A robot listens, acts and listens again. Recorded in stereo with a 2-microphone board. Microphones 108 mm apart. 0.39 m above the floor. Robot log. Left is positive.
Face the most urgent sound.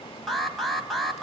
cmd yaw +30
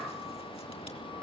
note: So it is at 30° right.
cmd yaw -30
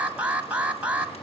note: The alarm is now 15° right.
cmd yaw -15
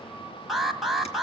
end: Found it: an alarm, straight ahead.